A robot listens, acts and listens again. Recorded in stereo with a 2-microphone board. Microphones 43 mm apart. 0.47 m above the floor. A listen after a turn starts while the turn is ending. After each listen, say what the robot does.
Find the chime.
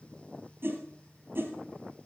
Keep listening.
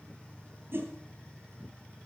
Keep listening.
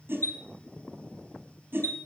Turn 90° left.
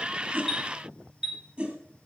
Turn 10° right.
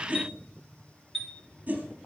Found it: a chime, straight ahead, 2 to 4 m away.